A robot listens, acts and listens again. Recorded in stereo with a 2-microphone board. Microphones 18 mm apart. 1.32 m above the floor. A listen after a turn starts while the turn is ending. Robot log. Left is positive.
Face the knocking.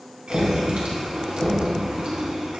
cmd yaw +30
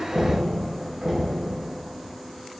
note: So it is at 20° right.
cmd yaw -20
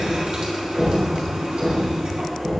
end: Facing the knocking.